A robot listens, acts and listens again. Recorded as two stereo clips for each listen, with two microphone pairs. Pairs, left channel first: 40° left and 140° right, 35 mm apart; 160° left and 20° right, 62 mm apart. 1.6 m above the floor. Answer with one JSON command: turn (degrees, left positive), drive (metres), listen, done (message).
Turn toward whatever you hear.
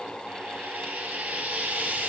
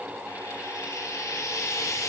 {"turn": -175}
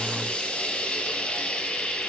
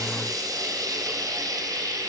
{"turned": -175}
{"turn": -10}
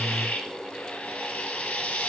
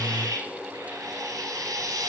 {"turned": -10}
{"done": "Facing the frying."}